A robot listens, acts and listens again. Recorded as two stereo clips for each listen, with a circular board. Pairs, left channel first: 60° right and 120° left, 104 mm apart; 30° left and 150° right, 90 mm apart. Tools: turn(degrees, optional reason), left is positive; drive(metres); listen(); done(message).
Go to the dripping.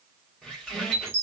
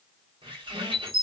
listen()
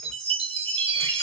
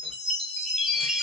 listen()
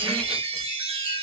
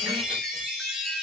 done("I can't make out dripping, only a squeak and a chime.")